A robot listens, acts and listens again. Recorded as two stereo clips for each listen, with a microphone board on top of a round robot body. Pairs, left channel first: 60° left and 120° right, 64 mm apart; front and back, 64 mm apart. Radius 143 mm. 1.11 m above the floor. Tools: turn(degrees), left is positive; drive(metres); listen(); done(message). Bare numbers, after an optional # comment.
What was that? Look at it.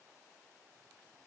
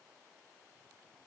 listen()
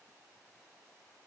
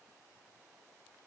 listen()
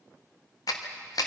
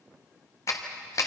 # The clap: 40° left.
turn(40)
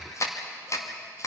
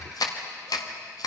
# The clap is now 20° left.
turn(20)
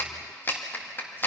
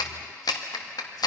done("Facing the clap.")